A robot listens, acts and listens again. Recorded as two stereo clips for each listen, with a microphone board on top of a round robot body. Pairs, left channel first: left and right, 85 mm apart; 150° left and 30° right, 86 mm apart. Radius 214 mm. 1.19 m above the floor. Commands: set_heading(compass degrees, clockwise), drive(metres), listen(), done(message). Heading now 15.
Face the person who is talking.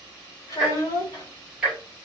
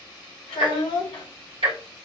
set_heading(240)
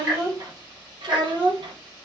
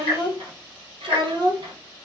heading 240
set_heading(305)
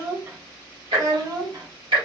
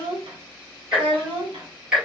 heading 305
set_heading(355)
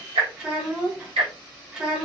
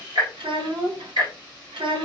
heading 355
set_heading(5)
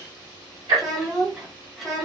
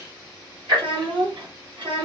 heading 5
done("Facing the child speaking, 1 to 2 m away.")